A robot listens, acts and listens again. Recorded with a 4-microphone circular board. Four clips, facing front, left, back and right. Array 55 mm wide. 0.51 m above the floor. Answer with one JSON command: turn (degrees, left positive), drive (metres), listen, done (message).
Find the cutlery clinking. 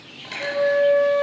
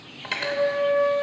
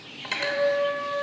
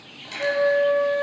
{"turn": 115}
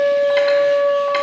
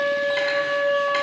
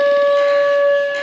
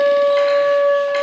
{"listen": true}
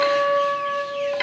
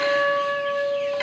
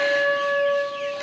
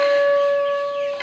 {"done": "Found it: cutlery clinking, straight ahead."}